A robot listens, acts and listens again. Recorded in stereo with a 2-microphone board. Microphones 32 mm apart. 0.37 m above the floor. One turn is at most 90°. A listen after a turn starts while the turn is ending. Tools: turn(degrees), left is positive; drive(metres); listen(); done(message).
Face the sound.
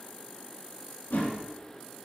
turn(degrees=90)
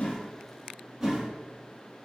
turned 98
turn(degrees=-10)
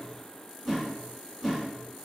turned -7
done("Facing the whoosh.")